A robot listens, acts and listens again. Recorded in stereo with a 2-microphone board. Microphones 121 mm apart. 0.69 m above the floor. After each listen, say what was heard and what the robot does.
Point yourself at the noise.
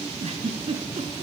The giggle: about 65° right or 115° right. Turn 65° right.
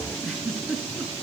Found it: a giggle, straight ahead.